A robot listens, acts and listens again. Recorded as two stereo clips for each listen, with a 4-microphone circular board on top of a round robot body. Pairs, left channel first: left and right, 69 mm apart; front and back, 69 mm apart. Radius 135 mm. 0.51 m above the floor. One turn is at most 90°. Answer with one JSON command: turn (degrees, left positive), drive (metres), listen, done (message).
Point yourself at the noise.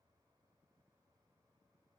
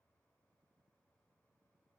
{"listen": true}
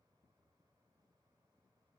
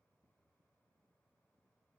{"listen": true}
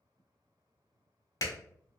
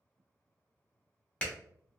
{"turn": 70}
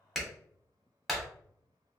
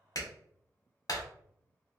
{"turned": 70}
{"done": "Facing the clap."}